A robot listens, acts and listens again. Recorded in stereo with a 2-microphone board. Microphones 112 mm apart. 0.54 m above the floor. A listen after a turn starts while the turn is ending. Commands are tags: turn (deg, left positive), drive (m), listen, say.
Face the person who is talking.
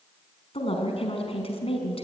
<turn deg="60"/>
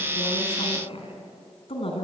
<turn deg="60"/>
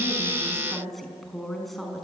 <say>Found it: a woman speaking, straight ahead.</say>